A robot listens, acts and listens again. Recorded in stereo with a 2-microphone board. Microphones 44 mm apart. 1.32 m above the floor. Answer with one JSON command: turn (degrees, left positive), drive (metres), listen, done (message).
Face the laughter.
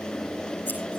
{"listen": true}
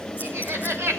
{"turn": -90}
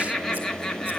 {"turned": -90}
{"turn": 10}
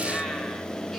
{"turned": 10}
{"listen": true}
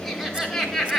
{"done": "Found it: laughter, straight ahead."}